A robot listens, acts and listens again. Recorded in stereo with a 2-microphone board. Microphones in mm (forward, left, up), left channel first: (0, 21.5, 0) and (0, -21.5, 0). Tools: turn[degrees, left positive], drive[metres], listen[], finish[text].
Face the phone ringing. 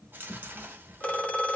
Thought: The phone ringing: about 30° left or 150° left.
Action: turn[30]
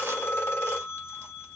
Thought: So it is at 120° left.
Action: turn[120]
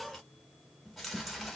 Action: listen[]
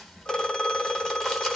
Thought: The phone ringing is now 15° left.
Action: turn[15]
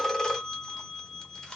Action: finish[Found it: a phone ringing, straight ahead, under 1 m away.]